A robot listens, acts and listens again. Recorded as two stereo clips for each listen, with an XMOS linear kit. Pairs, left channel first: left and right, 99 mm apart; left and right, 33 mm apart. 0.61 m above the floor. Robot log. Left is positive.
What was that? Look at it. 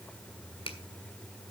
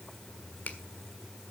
note: The finger snap: about 65° left or 115° left.
cmd yaw +65
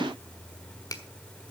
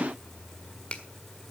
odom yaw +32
note: So it is at 40° left.
cmd yaw +40
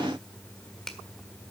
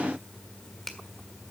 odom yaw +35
end: Found it: a finger snap, straight ahead.